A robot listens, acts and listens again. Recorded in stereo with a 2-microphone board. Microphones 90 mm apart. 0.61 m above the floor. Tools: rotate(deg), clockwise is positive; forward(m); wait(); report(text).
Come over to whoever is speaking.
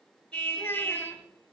rotate(-25)
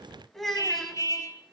forward(1.0)
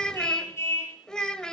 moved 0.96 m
rotate(-10)
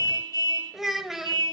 forward(1.0)
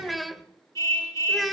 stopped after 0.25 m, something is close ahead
report("I am next to the child speaking.")